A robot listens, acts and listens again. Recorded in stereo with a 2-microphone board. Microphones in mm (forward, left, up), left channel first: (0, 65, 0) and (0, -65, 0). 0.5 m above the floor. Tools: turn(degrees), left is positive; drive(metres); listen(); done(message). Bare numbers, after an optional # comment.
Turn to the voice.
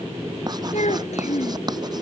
# The child speaking: about 75° left or 105° left.
turn(75)
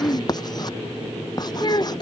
# So it is at 35° left.
turn(35)
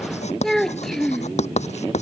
done("Facing the child speaking.")